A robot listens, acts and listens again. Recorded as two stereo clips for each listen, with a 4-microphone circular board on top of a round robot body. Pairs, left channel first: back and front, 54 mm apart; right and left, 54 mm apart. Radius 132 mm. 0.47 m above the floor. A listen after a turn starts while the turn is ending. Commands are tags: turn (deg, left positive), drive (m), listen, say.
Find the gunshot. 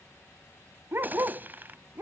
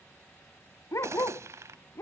<turn deg="55"/>
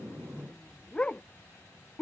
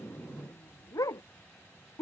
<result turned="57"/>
<say>Facing where the gunshot came from. I can't hear it now.</say>